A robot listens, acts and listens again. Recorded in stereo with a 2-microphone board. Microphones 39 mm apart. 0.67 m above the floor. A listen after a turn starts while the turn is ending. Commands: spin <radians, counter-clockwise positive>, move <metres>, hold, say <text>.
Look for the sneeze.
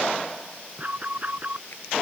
hold
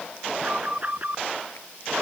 hold
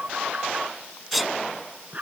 spin 0.52
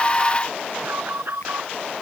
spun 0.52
hold
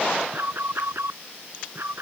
say I heard a sneeze, but can't make it out now. It was about 30° right or 150° left.